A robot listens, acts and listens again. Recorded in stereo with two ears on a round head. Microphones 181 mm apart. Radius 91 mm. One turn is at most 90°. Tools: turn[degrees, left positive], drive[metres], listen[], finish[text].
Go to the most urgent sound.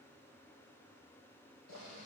Action: listen[]
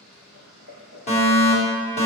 Thought: The fire alarm: about 35° left or 145° left.
Action: turn[35]
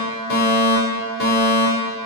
Thought: So it is at 105° left.
Action: turn[90]
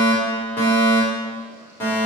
Thought: The fire alarm is now 15° left.
Action: turn[15]
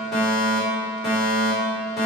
Action: drive[1.0]
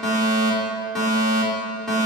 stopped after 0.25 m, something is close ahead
Action: finish[Blocked. The fire alarm is further on, straight ahead.]